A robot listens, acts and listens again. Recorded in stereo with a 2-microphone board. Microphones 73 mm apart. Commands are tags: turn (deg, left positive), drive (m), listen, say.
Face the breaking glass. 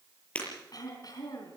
<turn deg="20"/>
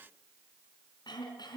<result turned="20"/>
<listen/>
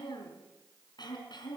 <say>I heard breaking glass, but can't make it out now. It was about straight ahead or 140° left.</say>